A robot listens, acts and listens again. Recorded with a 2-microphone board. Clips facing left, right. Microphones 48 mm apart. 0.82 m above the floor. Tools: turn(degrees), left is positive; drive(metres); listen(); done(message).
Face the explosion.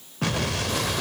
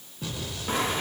turn(degrees=75)
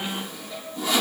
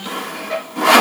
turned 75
listen()
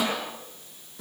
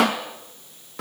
done("I heard an explosion, but can't make it out now. It was about straight ahead or 30° left.")